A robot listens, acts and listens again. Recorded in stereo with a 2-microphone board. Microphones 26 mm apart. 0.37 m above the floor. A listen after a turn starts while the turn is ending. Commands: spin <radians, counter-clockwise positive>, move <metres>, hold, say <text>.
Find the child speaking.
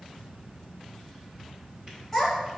spin 0.52
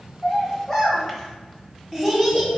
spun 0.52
spin 0.52
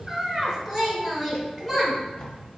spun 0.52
spin 0.52
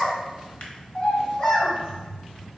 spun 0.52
spin 2.44
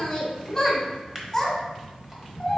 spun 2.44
say Facing the child speaking, 2 to 4 m away.